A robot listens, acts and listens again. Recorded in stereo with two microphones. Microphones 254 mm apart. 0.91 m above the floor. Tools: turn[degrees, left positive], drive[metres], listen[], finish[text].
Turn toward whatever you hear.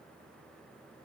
Action: listen[]
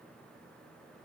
Action: listen[]
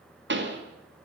Thought: The pop: about 45° right or 135° right.
Action: turn[-45]
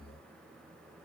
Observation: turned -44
Action: listen[]
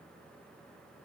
Action: finish[I heard a pop, but can't make it out now. It was about straight ahead or 90° right.]